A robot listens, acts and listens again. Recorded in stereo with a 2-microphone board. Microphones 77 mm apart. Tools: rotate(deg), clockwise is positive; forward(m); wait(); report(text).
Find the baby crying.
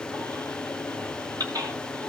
rotate(55)
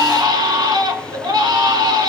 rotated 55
rotate(70)
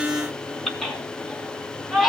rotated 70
report("Facing the baby crying.")